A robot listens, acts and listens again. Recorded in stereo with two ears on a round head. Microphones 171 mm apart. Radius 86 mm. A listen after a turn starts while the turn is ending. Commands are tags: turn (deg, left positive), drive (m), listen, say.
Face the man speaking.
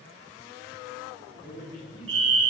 <turn deg="90"/>
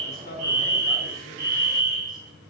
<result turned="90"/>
<listen/>
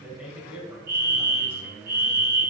<turn deg="-10"/>
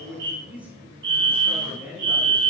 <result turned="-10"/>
<turn deg="-10"/>
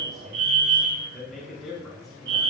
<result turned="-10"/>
<say>Found it: a man speaking, straight ahead.</say>